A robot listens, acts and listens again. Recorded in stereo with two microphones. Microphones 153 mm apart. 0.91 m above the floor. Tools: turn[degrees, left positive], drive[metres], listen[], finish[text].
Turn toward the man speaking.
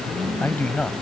Action: turn[30]
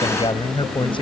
Thought: So it is at 145° left.
Action: turn[145]
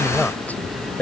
Thought: The man speaking is now 15° left.
Action: turn[15]
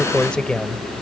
Action: finish[Facing the man speaking.]